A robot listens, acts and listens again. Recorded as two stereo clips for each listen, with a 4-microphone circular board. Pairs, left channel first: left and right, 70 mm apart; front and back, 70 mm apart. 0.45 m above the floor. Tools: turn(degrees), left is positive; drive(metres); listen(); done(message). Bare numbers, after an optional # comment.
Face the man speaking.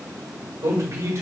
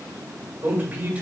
# The man speaking: 115° right.
turn(-115)
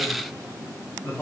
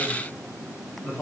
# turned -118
# The man speaking is now 40° left.
turn(40)
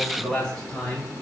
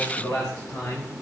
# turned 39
# The man speaking is now 20° left.
turn(20)
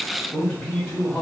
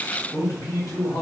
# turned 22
# The man speaking is now 10° left.
turn(10)
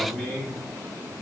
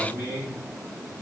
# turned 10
done("Found it: a man speaking, straight ahead.")